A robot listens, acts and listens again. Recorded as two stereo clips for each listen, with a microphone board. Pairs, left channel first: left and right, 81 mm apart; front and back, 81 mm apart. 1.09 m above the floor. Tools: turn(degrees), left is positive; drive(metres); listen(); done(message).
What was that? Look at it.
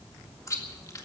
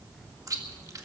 turn(degrees=135)
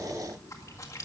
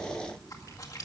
turn(degrees=45)
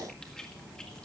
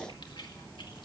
listen()
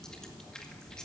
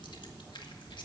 turn(degrees=10)
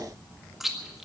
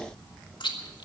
done("Facing the chewing.")